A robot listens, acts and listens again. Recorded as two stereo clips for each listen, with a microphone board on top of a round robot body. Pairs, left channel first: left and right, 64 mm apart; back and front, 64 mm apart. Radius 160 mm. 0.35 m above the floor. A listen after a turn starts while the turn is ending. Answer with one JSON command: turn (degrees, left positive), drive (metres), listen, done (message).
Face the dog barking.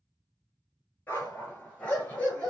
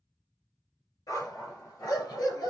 {"turn": 160}
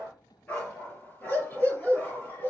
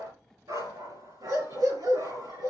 {"turn": 25}
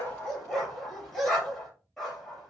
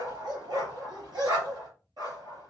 {"done": "Facing the dog barking."}